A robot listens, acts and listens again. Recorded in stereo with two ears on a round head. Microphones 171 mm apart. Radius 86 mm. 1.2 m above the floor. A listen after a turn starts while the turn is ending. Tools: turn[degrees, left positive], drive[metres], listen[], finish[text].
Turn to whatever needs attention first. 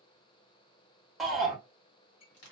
Action: turn[30]
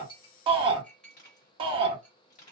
Thought: So it is at 30° right.
Action: turn[-30]
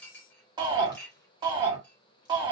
Thought: The shout is now 25° right.
Action: turn[-25]
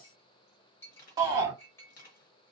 Thought: The shout is now 20° right.
Action: turn[-20]
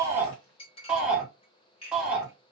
Action: finish[Found it: a shout, straight ahead, 1 to 2 m away.]